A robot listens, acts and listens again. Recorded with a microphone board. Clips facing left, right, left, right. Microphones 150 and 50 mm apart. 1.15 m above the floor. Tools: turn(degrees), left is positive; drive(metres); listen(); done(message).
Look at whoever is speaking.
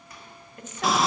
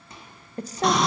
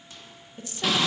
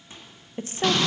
turn(degrees=-35)
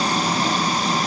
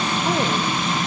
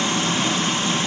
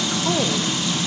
listen()
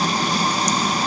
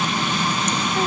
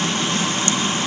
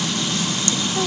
listen()
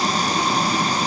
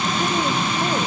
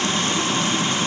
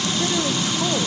done("I heard a woman speaking, but can't make it out now. It was about straight ahead or 110° right.")